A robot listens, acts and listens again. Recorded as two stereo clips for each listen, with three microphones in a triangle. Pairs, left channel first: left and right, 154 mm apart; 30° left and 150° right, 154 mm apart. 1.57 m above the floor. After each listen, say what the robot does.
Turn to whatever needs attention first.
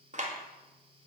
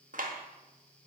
Keep listening.
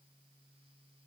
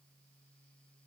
Keep listening.
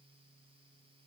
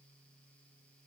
I can't make out anything urgent to turn to.